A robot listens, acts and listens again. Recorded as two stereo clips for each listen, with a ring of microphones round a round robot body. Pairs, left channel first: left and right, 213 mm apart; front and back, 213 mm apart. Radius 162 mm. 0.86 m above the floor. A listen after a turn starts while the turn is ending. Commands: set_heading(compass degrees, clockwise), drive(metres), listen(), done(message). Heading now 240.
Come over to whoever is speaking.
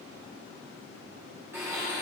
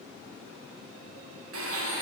listen()
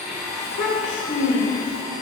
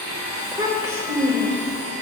set_heading(135)
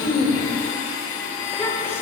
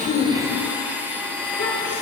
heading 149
set_heading(139)
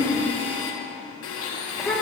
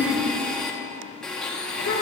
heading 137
drive(1.0)
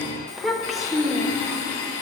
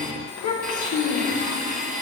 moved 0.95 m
drive(1.0)
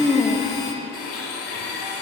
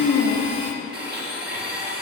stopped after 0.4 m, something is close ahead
done("I am next to the child speaking.")